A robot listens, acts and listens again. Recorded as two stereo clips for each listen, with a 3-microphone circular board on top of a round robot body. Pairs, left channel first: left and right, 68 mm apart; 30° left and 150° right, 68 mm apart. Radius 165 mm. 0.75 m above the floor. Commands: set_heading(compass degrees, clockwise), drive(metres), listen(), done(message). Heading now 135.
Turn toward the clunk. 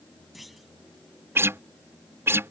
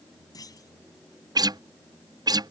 done("Found it: a clunk, straight ahead.")